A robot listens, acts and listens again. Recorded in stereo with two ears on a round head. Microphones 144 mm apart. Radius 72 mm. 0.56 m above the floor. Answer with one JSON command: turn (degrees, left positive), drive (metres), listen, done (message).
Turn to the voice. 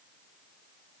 {"listen": true}
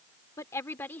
{"turn": 30}
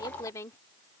{"turn": 15}
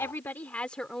{"turn": 30}
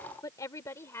{"turn": 165}
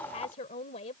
{"turn": 45}
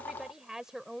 {"done": "Found it: a woman speaking, straight ahead."}